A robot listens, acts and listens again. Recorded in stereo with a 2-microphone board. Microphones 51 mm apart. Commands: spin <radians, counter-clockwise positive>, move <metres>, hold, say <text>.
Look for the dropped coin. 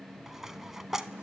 spin -0.52
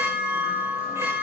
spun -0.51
hold
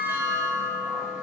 say I heard a dropped coin, but can't make it out now. It was about 20° left or 140° right.